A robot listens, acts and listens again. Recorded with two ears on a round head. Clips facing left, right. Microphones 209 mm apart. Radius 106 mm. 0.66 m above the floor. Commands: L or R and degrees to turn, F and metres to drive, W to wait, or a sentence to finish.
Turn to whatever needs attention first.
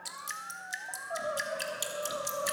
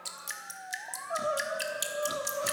R55
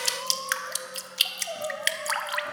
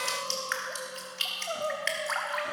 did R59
R15
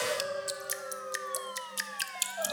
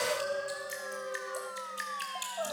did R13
Facing the crying.